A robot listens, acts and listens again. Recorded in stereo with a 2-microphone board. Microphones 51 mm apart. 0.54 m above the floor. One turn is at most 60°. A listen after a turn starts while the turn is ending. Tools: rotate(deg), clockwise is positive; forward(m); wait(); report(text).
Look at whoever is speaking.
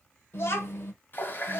rotate(-55)
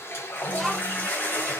report("Found it: a child speaking, straight ahead.")